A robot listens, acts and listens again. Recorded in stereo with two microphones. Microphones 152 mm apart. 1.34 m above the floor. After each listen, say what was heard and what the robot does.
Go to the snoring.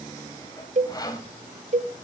Keep listening.
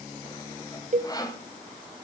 Keep listening.
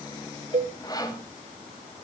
I can't make out snoring, only a cowbell and sawing.